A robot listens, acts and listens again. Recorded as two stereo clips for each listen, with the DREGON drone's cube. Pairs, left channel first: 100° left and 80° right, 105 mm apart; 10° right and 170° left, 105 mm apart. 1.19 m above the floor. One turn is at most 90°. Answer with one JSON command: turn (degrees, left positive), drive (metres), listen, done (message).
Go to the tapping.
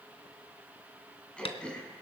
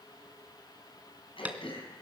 {"turn": 90}
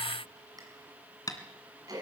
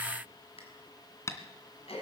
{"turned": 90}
{"turn": 50}
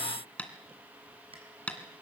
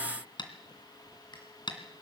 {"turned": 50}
{"turn": 20}
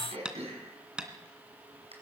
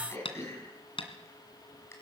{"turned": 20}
{"drive": 1.0}
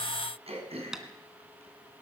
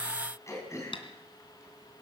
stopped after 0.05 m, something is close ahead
{"done": "Blocked. The tapping is further on, straight ahead."}